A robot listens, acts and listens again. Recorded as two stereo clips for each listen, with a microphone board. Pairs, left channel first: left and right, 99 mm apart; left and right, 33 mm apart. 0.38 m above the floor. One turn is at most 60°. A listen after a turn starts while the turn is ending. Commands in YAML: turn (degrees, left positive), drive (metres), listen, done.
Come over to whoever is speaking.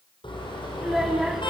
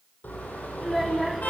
turn: 30
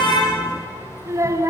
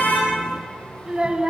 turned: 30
turn: -30
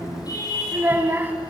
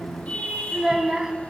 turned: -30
turn: -20
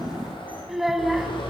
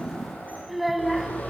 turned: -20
drive: 1.0
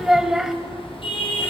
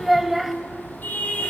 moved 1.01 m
drive: 1.0
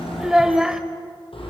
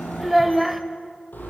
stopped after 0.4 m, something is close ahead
done: "I am next to the child speaking."